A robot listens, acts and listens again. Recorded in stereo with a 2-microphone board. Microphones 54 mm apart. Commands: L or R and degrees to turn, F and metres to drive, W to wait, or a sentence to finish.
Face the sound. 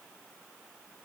W
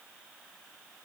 W
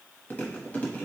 L30
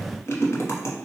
L125
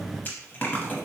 L35
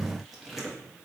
Facing the chewing.